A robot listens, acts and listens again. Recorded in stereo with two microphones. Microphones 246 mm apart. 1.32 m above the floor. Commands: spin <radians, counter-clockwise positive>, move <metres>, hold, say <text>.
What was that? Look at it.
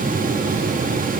hold
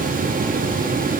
hold
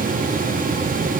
say I can't make out anything.